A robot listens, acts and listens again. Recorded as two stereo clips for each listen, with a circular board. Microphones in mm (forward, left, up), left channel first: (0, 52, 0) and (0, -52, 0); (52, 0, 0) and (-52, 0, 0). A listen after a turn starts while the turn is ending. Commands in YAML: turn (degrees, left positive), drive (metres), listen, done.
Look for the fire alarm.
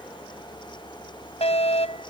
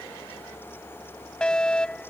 turn: 80
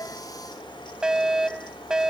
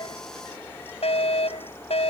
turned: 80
done: "Found it: a fire alarm, straight ahead."